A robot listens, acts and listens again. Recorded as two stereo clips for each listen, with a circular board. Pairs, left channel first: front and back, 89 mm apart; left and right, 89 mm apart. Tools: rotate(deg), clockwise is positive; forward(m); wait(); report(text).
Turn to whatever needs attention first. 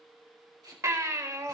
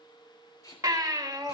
rotate(130)
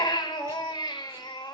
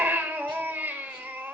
rotate(25)
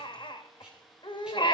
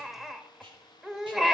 report("Facing the baby crying.")